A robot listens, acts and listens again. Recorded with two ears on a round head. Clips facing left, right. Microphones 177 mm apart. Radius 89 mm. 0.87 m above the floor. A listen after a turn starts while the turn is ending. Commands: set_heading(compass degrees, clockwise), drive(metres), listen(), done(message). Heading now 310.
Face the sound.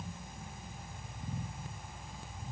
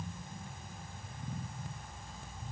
listen()
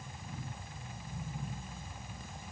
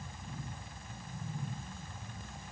listen()
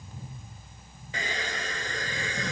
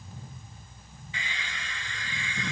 set_heading(270)
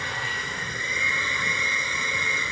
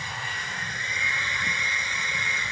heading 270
set_heading(170)
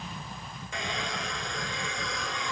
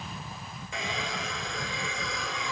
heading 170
done("Found it: a hair dryer, straight ahead.")